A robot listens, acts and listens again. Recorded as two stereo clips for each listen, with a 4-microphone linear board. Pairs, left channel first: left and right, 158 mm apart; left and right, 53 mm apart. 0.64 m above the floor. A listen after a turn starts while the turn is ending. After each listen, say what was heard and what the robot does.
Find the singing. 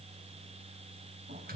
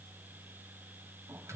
Keep listening.
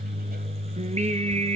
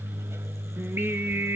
The singing: about 45° right or 135° right. Turn 45° right.
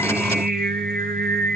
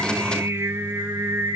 So it is at 90° right. Turn 90° right.
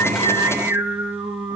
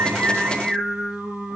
The singing is now 15° right. Turn 15° right.
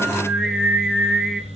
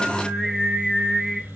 Found it: singing, straight ahead, 2 to 4 m away.